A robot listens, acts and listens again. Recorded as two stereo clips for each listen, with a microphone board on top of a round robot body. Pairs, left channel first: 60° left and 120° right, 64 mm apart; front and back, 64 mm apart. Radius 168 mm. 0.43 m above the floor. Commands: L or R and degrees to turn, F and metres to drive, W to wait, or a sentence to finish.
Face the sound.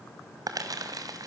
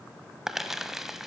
R95
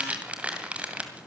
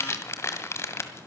R50
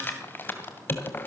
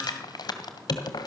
Facing the crumpling, 2 to 4 m away.